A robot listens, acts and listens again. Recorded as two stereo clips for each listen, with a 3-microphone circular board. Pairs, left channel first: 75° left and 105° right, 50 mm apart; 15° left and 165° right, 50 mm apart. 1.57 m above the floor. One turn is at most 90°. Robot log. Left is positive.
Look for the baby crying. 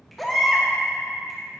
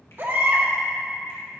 note: The baby crying: 165° left.
cmd yaw +90
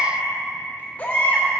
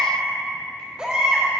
note: The baby crying is now 125° left.
cmd yaw +90
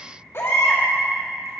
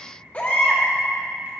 note: The baby crying is now 70° left.
cmd yaw +70
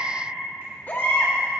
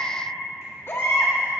note: The baby crying is now 30° left.
cmd yaw +30
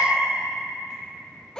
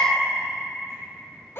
end: Found it: a baby crying, straight ahead.